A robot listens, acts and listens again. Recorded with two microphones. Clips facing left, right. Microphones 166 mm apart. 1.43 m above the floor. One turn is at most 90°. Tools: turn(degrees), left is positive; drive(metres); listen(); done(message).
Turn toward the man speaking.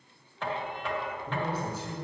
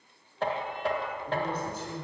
turn(degrees=30)
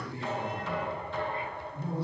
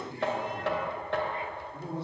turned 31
turn(degrees=-25)
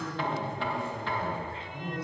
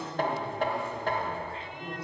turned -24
done("Facing the man speaking.")